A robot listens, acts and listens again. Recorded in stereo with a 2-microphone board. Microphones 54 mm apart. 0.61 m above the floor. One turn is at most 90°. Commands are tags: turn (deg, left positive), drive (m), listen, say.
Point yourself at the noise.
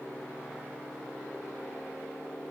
<listen/>
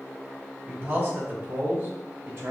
<turn deg="-50"/>
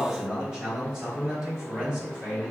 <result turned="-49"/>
<turn deg="-15"/>
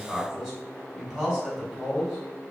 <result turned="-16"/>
<say>Found it: a man speaking, straight ahead, 2 to 4 m away.</say>